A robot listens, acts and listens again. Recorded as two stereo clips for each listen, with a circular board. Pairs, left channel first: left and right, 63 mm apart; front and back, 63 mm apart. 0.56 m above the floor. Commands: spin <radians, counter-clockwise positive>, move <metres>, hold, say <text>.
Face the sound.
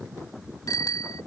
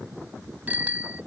spin 2.01
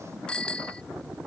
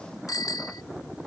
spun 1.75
spin 0.26
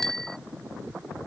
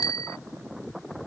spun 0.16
say Facing the bicycle bell.